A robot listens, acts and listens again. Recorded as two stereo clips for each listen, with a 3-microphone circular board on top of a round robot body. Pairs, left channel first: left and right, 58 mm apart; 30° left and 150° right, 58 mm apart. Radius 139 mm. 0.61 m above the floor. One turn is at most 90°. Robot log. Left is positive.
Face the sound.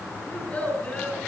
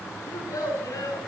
note: The child speaking: 20° left.
cmd yaw +20
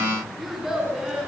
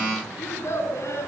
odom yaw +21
note: The child speaking is now 10° right.
cmd yaw -10
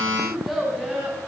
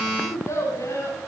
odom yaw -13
end: Facing the child speaking.